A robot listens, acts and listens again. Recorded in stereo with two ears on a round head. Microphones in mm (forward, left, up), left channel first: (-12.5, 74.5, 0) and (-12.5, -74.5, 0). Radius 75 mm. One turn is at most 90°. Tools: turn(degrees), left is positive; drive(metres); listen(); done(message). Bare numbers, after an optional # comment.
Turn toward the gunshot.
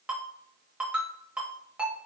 listen()
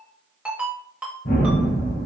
turn(90)
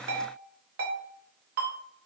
done("I heard a gunshot from this way, but can't make it out now.")